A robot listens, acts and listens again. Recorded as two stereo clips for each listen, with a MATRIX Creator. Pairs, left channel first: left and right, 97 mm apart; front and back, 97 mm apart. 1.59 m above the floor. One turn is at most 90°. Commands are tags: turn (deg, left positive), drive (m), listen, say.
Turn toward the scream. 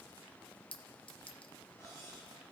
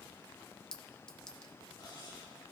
<listen/>
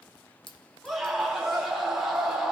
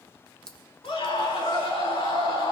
<say>Facing the scream.</say>